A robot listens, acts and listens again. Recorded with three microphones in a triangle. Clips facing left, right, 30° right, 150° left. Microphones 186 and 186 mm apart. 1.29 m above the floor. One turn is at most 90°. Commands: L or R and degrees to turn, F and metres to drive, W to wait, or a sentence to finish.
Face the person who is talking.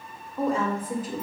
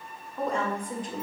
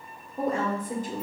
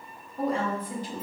Found it: a woman speaking, straight ahead, 1 to 2 m away.